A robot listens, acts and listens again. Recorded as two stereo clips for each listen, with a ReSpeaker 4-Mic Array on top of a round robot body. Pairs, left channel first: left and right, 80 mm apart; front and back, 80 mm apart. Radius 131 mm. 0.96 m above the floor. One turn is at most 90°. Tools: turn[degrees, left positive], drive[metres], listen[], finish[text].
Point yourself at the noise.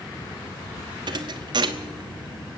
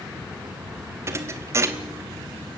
Thought: The thud: 125° right.
Action: turn[-90]
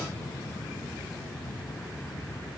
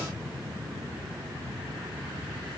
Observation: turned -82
Thought: Nothing new. It was at 40° right.
Action: turn[-40]
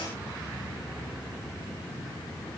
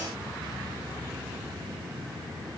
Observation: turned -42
Action: finish[I heard a thud from this way, but can't make it out now.]